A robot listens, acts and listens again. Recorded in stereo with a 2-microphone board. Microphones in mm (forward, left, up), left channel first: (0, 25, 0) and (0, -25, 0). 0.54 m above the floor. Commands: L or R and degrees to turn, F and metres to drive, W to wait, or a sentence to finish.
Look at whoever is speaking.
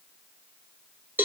W
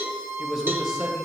R30
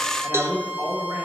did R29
R140
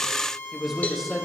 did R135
Facing the man speaking.